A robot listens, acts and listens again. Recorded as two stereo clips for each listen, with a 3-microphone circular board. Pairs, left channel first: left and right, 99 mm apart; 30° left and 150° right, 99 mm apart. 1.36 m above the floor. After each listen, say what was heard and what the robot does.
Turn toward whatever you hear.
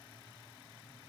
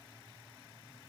Keep listening.
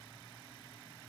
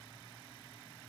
Keep listening.
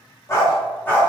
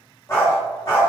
The dog barking: 30° left. Turn 30° left.
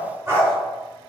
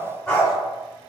The dog barking is now 50° right. Turn 50° right.
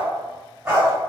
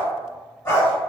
The dog barking is now 35° right. Turn 35° right.
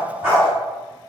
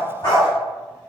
The dog barking is now 20° right. Turn 20° right.
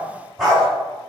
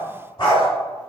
Facing the dog barking.